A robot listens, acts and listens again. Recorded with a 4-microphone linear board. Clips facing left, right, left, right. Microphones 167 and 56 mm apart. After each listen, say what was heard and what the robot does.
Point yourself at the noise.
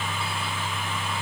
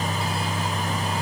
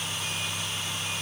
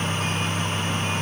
Keep listening.
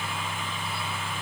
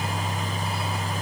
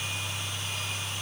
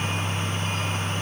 Keep listening.
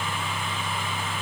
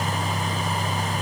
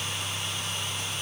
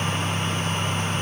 I can't make out anything.